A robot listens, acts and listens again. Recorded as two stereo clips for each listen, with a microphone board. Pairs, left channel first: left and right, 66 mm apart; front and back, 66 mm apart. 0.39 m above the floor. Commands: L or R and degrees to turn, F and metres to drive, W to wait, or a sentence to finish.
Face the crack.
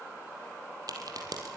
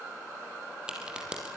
R105
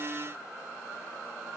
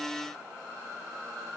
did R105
Facing where the crack came from. I can't hear it now.